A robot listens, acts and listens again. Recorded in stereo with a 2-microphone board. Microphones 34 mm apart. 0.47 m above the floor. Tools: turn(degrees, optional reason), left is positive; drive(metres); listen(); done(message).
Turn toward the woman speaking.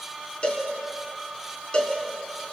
listen()
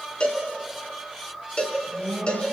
turn(degrees=40, reason="The woman speaking: about 40° left or 140° left.")
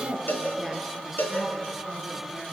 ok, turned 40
done("Found it: a woman speaking, straight ahead, over 4 m away.")